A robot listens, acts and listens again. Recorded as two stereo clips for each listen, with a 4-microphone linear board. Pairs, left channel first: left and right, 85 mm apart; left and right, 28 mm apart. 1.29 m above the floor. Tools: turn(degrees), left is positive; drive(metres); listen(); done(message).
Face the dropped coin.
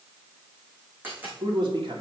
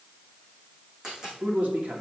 turn(degrees=-20)
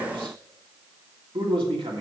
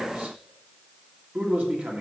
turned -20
listen()
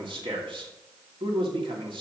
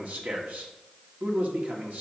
done("I heard a dropped coin, but can't make it out now. It was about straight ahead or 140° right.")